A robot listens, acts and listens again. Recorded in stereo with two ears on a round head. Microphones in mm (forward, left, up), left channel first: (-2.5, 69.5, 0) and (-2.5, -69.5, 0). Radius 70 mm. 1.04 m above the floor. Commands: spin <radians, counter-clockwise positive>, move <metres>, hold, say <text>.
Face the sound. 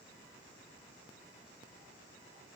hold
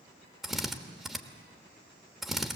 spin 0.52
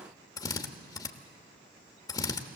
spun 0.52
spin 2.71
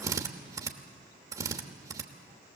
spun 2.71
spin -0.44
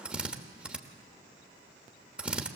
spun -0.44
spin -0.17
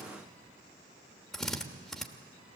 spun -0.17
say Facing the drill, 1 to 2 m away.